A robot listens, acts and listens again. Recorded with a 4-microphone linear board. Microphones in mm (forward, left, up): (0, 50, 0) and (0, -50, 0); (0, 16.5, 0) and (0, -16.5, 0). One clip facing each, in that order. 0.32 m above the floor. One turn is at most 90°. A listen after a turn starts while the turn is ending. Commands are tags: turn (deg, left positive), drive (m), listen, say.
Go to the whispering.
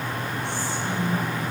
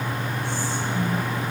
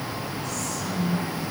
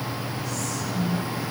<turn deg="65"/>
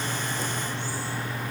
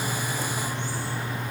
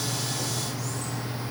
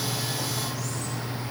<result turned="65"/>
<listen/>
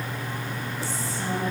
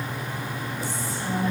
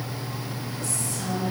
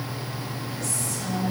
<turn deg="35"/>
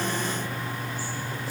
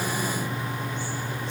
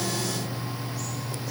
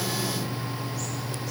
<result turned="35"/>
<listen/>
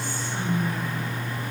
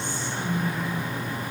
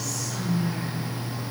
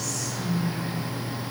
<drive m="1.0"/>
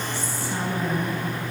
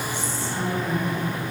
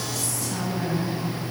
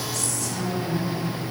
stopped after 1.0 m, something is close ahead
<turn deg="15"/>
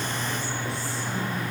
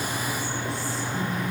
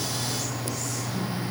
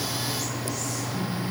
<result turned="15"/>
<listen/>
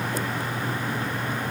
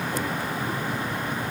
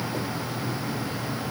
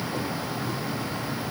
<listen/>
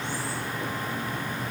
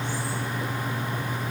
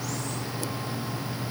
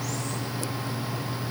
<say>I heard whispering from this way, but can't make it out now. I did not reach it.</say>